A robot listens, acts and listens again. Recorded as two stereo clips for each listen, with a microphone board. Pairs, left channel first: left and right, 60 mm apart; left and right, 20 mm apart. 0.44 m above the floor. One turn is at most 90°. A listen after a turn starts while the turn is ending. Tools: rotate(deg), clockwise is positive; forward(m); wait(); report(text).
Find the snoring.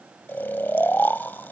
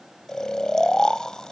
rotate(-35)
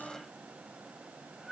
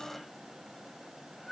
report("Facing the snoring.")